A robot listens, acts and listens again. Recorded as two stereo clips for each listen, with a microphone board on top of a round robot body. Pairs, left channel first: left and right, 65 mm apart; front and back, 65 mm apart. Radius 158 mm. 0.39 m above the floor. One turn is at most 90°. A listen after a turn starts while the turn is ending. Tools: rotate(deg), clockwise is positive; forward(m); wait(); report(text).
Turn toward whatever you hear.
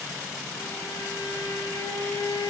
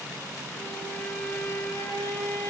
rotate(-55)
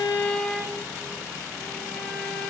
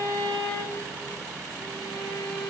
rotate(-10)
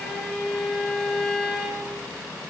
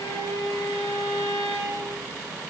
report("Found it: a violin, straight ahead.")